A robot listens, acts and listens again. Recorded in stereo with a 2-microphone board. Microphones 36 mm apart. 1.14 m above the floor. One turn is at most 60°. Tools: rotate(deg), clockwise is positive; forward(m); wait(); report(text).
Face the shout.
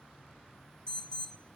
wait()
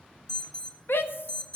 rotate(-60)
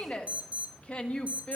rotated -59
rotate(-30)
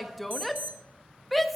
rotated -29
report("Facing the shout, 1 to 2 m away.")